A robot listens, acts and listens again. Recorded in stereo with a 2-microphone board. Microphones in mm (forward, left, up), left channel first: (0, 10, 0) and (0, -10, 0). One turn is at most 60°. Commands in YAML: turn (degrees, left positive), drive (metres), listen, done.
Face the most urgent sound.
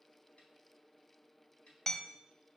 listen: true
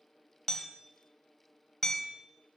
listen: true
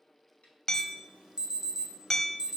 turn: -50
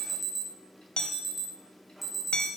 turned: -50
turn: -10
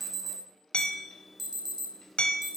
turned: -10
done: "Facing the alarm, 1 to 2 m away."